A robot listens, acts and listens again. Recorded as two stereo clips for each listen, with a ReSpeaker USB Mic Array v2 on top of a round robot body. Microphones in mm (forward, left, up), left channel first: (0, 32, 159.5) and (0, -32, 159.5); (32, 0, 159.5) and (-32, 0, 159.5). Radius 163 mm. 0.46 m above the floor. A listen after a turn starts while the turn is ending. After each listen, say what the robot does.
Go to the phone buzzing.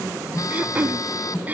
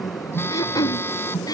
Turn 55° left.
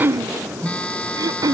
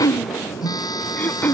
Turn 20° left.
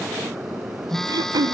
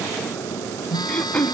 Drive 1.0 m forward.
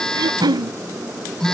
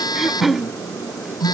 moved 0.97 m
Turn 10° left.
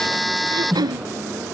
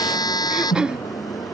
Drive 1.0 m forward.
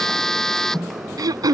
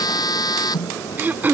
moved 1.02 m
Turn 10° left.
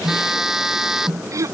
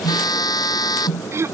Drive 1.0 m forward.
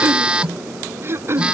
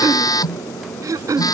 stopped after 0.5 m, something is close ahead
Turn 15° right.
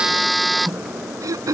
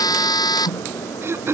I am next to the phone buzzing.